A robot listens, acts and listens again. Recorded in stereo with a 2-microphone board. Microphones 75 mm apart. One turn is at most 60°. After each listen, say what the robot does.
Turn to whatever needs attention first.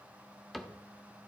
Keep listening.
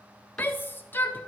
Turn 30° left.
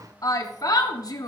Turn 60° left.
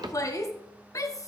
Turn 50° left.
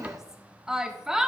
Turn 10° right.
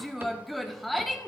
Found it: a shout, straight ahead.